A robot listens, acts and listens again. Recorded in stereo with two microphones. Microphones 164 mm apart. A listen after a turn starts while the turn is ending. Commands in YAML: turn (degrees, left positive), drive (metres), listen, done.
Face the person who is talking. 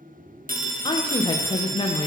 turn: 30
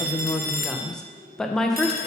done: "Found it: a woman speaking, straight ahead, 1 to 2 m away."